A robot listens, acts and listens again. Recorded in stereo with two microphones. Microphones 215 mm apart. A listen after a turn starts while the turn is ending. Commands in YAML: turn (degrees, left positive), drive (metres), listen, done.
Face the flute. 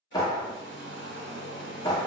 listen: true
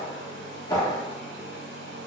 listen: true
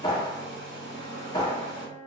turn: 30
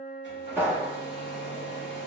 turn: 145
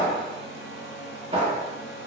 listen: true
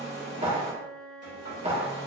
done: "Found it: a flute, straight ahead."